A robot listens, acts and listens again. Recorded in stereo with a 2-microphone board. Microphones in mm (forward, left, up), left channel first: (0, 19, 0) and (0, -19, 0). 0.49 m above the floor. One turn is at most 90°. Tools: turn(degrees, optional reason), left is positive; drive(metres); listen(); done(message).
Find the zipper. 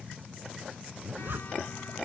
turn(degrees=-65, reason="The zipper: about 65° right or 115° right.")
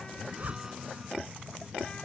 turn(degrees=-45, reason="So it is at 45° right.")
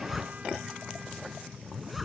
done("Facing the zipper.")